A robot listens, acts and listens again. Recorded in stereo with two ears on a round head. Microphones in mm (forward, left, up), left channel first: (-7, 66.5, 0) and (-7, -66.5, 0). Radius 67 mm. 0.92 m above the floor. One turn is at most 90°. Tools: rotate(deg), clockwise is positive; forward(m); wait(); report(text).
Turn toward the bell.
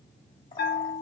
rotate(-90)
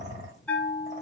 rotate(-10)
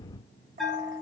report("Found it: a bell, straight ahead, 1 to 2 m away.")